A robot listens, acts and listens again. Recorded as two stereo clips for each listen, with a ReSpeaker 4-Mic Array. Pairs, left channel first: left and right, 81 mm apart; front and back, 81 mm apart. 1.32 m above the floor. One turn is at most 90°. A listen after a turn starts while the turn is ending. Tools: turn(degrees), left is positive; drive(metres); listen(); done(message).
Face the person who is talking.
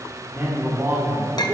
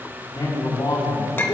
turn(degrees=-30)
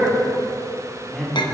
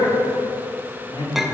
done("Found it: a man speaking, straight ahead.")